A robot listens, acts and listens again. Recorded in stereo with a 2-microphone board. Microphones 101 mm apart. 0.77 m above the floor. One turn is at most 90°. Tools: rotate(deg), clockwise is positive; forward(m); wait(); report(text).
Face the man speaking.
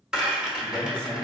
rotate(60)
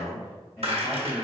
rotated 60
report("Found it: a man speaking, straight ahead, 1 to 2 m away.")